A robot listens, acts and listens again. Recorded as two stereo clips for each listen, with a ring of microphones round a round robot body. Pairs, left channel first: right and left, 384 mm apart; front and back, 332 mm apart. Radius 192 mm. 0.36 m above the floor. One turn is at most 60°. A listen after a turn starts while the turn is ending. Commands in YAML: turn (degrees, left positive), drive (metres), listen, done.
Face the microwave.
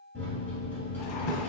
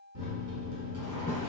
turn: -60
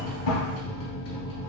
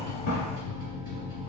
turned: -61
turn: -60
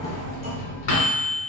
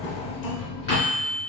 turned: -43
turn: -60
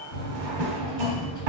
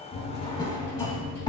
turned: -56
turn: -15
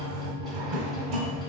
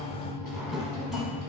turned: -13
done: "Facing the microwave."